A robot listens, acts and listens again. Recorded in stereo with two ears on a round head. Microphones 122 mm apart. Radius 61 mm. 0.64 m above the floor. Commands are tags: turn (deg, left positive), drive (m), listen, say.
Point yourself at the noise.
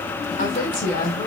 <turn deg="65"/>
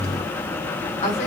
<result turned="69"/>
<turn deg="50"/>
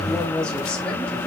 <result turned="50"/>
<say>Found it: a woman speaking, straight ahead.</say>